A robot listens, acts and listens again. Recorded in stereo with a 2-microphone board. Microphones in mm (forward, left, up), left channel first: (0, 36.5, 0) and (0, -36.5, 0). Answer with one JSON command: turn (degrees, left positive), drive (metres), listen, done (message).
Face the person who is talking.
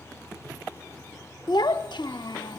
{"turn": 90}
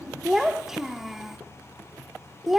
{"done": "Found it: a child speaking, straight ahead, under 1 m away."}